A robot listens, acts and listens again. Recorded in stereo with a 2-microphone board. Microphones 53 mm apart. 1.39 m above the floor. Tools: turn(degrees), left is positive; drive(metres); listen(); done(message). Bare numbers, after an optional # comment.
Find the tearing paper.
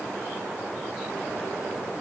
listen()
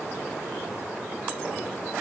listen()
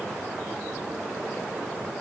done("I can't make out tearing paper.")